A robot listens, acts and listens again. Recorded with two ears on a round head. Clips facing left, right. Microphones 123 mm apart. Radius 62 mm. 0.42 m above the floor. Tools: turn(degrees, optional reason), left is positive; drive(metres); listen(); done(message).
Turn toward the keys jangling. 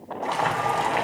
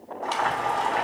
listen()
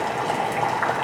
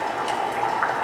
listen()
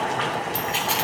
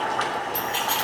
turn(degrees=30)
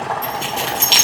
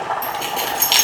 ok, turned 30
done("Found it: keys jangling, straight ahead.")